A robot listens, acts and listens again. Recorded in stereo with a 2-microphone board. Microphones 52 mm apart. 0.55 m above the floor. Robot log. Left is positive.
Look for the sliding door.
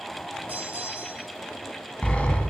note: The sliding door: about 20° left or 160° left.
cmd yaw +20
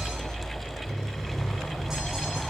end: Facing the sliding door.